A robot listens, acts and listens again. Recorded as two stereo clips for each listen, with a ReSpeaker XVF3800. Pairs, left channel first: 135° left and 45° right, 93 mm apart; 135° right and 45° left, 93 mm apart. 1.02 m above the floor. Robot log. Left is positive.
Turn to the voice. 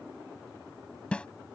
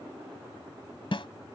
cmd idle
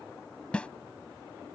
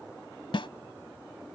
cmd idle
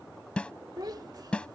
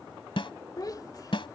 note: The child speaking: 85° right.
cmd yaw -85
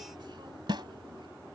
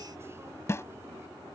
cmd idle
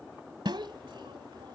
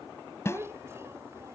note: The child speaking is now 15° right.
cmd yaw -15
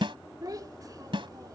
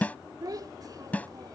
end: Facing the child speaking.